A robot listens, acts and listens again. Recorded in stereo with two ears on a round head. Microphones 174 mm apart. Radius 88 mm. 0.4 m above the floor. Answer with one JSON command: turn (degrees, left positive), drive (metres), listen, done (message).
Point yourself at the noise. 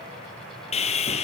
{"turn": 35}
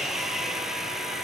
{"done": "Found it: sawing, straight ahead, 2 to 4 m away."}